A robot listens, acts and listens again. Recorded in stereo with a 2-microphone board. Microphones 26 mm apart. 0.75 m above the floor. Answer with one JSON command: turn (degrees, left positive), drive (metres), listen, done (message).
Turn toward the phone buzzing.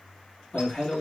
{"listen": true}
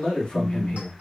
{"turn": -45}
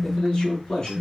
{"done": "Facing the phone buzzing."}